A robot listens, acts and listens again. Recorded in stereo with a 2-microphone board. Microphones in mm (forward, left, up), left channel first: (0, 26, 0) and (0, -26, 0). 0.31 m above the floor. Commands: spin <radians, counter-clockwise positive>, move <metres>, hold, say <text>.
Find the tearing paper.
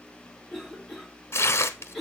spin 0.96
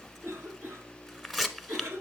say Found it: tearing paper, straight ahead.